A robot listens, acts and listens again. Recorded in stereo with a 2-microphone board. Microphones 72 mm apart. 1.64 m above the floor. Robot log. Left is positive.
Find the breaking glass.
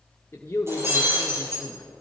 note: The breaking glass: about 40° right or 140° right.
cmd yaw -40
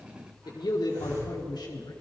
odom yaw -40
cmd idle
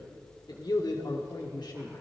end: I heard breaking glass, but can't make it out now. It was about straight ahead or 100° right.